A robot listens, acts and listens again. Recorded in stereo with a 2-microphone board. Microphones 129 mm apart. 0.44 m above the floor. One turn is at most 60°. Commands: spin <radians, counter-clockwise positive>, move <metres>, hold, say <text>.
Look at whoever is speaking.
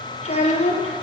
spin 0.87
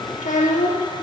spin 1.05
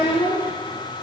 spin 0.70
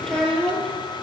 say Found it: a child speaking, straight ahead.